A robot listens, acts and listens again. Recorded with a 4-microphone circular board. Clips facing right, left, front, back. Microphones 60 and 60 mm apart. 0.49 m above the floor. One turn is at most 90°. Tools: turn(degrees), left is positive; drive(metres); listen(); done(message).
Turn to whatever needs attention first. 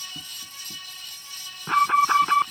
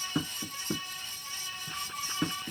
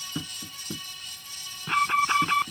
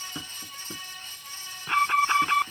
turn(degrees=-90)
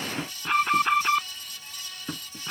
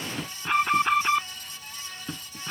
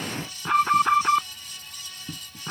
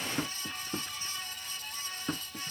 done("Found it: an alarm, straight ahead.")